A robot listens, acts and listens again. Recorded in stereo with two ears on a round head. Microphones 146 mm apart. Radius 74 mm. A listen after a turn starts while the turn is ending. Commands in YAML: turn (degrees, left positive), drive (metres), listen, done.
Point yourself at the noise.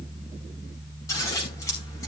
turn: 20
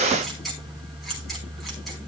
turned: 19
done: "Facing the scissors."